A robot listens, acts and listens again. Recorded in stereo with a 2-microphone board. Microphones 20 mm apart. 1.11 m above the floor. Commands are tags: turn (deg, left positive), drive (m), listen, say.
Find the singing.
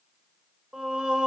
<turn deg="-60"/>
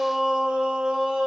<turn deg="-70"/>
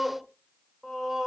<turn deg="-30"/>
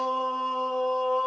<say>Facing the singing.</say>